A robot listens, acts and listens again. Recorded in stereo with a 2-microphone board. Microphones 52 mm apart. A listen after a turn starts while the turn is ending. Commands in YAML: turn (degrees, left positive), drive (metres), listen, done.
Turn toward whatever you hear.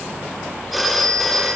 turn: 30
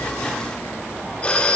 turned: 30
turn: 150
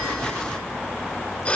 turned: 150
turn: 25
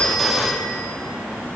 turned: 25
done: "Facing the phone ringing."